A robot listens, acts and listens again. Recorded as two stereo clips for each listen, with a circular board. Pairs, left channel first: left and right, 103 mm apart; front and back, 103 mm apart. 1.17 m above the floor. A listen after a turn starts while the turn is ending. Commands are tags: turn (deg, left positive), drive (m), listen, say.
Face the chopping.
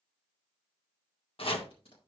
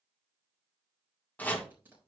<turn deg="75"/>
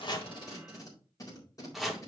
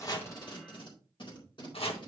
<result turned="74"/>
<say>Facing the chopping, 1 to 2 m away.</say>